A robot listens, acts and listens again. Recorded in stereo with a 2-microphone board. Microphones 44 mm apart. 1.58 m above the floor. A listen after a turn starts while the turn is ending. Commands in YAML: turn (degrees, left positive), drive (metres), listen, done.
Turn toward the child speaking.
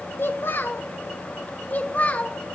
turn: 35
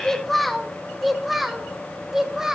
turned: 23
turn: -10
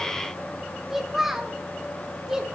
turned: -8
turn: -15
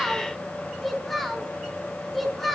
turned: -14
done: "Facing the child speaking, over 4 m away."